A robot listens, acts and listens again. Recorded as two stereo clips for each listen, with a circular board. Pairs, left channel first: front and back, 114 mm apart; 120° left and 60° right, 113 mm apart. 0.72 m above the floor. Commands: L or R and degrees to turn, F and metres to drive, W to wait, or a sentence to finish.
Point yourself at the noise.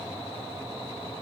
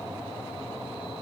W
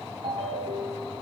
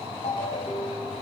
L145
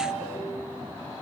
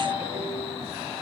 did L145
L20
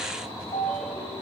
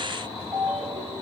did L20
Facing the ringtone.